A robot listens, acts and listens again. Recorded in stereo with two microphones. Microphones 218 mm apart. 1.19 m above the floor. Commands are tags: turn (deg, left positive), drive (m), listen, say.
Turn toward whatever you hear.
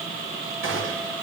<turn deg="-65"/>
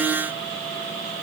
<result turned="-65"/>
<listen/>
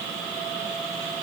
<say>I heard a gunshot, but can't make it out now. It was about straight ahead or 50° right.</say>